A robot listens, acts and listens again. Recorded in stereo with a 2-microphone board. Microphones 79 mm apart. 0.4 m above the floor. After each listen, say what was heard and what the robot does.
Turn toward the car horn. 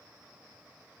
Keep listening.
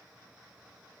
Keep listening.
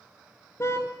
The car horn: about 35° left or 145° left. Turn 35° left.
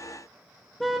Facing the car horn, 2 to 4 m away.